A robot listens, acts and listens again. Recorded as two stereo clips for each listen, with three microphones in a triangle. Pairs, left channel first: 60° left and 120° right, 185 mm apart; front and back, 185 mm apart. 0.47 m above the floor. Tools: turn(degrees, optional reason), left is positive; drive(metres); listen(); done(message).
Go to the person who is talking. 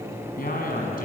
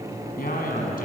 turn(degrees=30, reason="The man speaking: 30° left.")
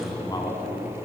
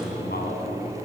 drive(metres=1.0)
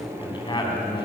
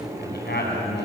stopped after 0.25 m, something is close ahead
done("Blocked. The man speaking is further on, straight ahead.")